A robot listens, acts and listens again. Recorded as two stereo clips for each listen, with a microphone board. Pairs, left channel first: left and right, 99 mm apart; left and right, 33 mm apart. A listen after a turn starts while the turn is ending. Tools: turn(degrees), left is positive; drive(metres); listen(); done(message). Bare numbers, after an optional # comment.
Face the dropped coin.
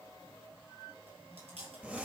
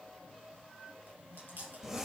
listen()
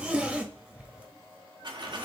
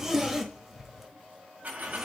# The dropped coin: about 50° right or 130° right.
turn(-50)
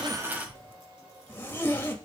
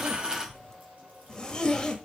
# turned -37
# So it is at 15° right.
turn(-15)
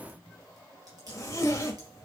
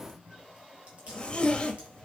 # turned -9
# Nothing new. It was at 10° right.
turn(-10)
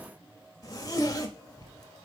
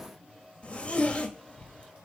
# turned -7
done("I heard a dropped coin from this way, but can't make it out now.")